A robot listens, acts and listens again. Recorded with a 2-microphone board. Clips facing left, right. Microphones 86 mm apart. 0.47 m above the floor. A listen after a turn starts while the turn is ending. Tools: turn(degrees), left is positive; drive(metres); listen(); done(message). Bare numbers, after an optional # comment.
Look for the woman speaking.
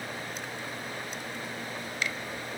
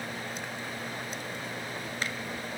listen()
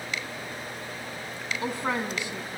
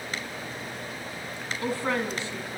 # The woman speaking: about 15° left or 165° left.
turn(15)
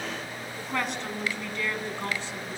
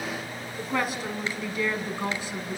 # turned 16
# So it is at 15° right.
turn(-15)
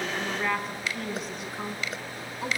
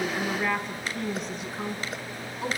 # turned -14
done("Facing the woman speaking, over 4 m away.")